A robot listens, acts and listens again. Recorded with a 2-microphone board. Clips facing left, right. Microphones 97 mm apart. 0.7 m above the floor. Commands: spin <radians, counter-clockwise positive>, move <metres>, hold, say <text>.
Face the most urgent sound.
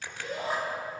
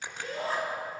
spin 0.26
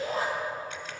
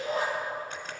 spin 2.53
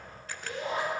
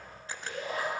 spin 0.44
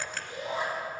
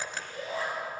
spin 0.35
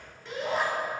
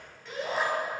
say Found it: a shout, straight ahead, over 4 m away.